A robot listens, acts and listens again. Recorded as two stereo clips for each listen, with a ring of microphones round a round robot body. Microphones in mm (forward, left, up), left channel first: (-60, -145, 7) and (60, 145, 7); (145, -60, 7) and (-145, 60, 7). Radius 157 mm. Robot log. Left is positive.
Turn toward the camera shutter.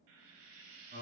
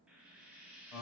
cmd idle
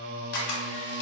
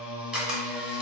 note: The camera shutter: 115° right.
cmd yaw -115
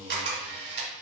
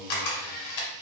note: The camera shutter is now 10° left.
cmd yaw +10
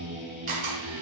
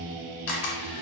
end: Found it: a camera shutter, straight ahead, 1 to 2 m away.